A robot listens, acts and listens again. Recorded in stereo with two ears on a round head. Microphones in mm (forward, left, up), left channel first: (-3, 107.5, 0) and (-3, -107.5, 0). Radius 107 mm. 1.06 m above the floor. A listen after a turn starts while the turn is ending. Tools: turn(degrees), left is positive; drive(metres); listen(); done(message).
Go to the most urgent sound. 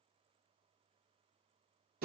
listen()
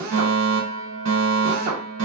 turn(degrees=-60)
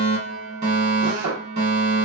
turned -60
turn(degrees=-35)
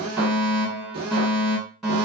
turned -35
drive(metres=1.0)
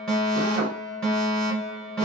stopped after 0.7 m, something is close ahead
done("I am next to the fire alarm.")